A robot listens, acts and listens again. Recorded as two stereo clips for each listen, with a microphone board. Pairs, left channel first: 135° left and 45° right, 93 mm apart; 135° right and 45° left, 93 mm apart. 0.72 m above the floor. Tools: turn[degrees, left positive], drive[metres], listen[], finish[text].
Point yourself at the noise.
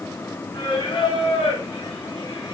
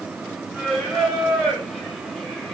Thought: The singing: 135° left.
Action: turn[135]
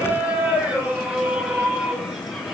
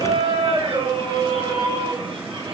Thought: The singing is now 40° left.
Action: turn[40]
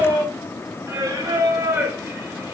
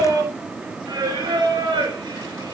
Thought: The singing is now 10° left.
Action: turn[10]
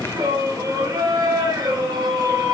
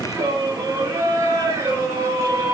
Action: finish[Facing the singing, 2 to 4 m away.]